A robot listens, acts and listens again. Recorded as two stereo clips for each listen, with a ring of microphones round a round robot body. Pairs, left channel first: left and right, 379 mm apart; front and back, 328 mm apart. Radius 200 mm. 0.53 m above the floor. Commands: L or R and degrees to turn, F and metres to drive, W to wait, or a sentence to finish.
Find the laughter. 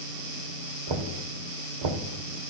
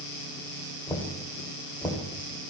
W
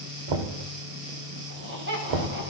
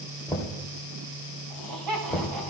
R150
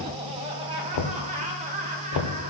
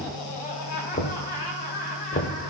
R20
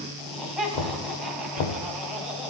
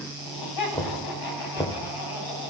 Found it: laughter, straight ahead, over 4 m away.